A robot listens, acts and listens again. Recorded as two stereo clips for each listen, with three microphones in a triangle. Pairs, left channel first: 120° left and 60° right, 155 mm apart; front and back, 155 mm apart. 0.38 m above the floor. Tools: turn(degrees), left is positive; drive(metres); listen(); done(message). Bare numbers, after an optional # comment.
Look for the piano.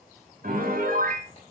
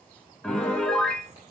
# The piano: 85° right.
turn(-85)
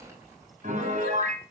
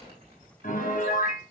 # The piano is now 25° right.
turn(-25)
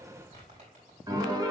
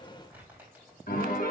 done("Found it: a piano, straight ahead, 1 to 2 m away.")